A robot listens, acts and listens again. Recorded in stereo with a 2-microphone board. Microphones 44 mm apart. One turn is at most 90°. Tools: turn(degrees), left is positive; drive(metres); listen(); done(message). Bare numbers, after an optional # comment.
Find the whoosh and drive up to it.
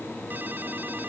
listen()
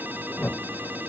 # The whoosh: about 70° left or 110° left.
turn(70)
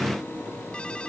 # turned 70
listen()
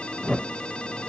# So it is at 20° left.
turn(20)
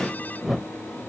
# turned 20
drive(1.0)
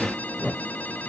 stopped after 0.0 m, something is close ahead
done("Something is in my way. I am facing the whoosh but have not reached it.")